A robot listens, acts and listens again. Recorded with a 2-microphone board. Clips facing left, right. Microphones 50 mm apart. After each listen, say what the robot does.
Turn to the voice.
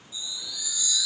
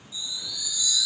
Keep listening.
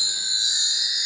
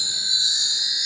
Keep listening.
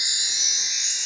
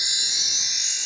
I can't make out anyone speaking to turn to.